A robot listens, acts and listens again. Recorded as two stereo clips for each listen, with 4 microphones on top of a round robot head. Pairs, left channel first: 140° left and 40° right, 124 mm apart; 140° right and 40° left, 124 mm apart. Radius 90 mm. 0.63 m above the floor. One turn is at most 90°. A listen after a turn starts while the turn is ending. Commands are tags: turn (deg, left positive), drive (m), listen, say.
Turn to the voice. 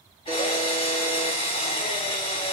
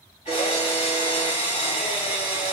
<listen/>
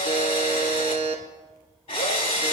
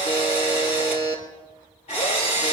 <listen/>
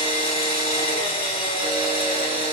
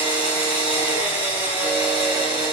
<say>I can't make out anyone speaking to turn to.</say>